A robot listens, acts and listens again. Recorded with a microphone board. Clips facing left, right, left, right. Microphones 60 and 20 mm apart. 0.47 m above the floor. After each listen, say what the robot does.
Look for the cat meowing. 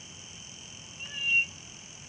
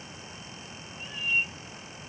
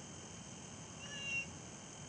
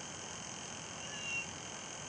Turn 30° left.
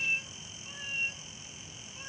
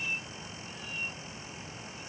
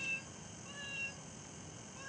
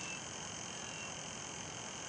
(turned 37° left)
Turn 145° left.
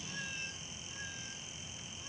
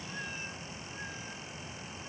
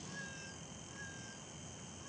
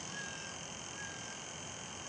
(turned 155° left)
Turn 10° right.
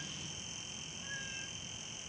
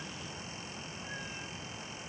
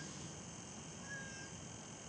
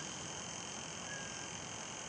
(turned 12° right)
Keep listening.
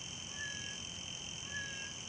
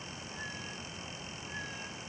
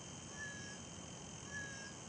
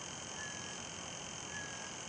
I heard a cat meowing from this way, but can't make it out now.